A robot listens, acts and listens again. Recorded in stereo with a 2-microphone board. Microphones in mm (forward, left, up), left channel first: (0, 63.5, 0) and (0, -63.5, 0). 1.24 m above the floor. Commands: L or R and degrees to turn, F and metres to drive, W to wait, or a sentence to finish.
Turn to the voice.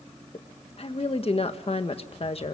L50
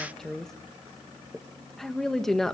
Found it: a woman speaking, straight ahead.